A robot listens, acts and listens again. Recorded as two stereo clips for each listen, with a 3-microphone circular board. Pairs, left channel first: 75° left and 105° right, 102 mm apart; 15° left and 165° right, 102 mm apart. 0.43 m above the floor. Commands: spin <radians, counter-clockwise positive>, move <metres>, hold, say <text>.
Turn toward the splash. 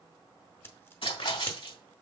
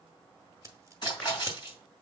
spin 0.96
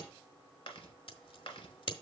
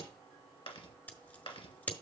say Facing where the splash came from. I can't hear it now.